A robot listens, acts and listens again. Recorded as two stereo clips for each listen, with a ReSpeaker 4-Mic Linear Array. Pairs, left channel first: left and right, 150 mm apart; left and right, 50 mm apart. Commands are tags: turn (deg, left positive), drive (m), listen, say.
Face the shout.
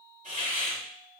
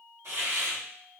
<listen/>
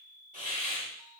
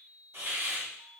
<listen/>
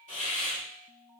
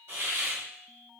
<say>I can't make out a shout, only a hiss.</say>